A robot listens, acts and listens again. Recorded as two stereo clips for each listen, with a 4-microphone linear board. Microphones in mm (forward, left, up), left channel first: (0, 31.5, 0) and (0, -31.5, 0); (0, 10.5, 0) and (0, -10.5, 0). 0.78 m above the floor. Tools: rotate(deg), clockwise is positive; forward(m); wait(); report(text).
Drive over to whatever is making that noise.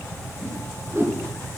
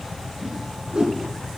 rotate(50)
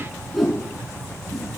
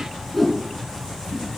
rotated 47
forward(1.0)
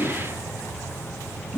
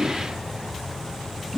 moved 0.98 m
forward(1.0)
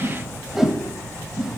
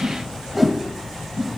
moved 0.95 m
forward(1.0)
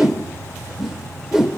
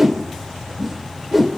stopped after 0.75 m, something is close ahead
rotate(10)
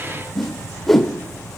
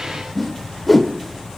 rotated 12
report("I am next to the whoosh.")